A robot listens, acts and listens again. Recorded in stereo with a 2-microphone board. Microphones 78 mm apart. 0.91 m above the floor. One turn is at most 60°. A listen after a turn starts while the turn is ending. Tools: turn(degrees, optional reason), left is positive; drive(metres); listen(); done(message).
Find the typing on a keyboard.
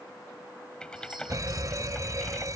turn(degrees=30)
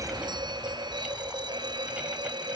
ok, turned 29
listen()
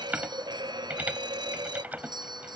turn(degrees=-20, reason="So it is at 20° right.")
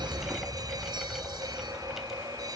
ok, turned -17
listen()
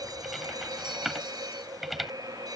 done("Facing the typing on a keyboard.")